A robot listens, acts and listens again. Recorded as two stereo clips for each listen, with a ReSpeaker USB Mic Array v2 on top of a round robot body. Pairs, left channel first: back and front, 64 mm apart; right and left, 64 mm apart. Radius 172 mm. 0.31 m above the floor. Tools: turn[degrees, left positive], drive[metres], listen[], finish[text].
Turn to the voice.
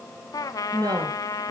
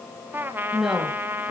Action: finish[Found it: a woman speaking, straight ahead, 2 to 4 m away.]